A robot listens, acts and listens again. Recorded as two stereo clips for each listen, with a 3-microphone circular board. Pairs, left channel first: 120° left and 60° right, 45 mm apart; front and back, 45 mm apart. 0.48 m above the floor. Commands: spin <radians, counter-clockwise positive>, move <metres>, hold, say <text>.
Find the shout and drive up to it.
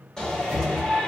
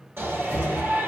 spin -2.88
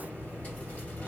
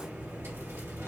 hold
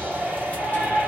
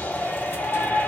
spin -0.35
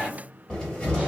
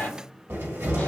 move 1.0
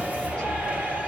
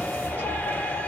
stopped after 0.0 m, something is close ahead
hold
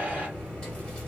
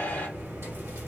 hold
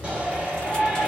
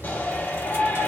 say Something is in my way. I am facing the shout but have not reached it.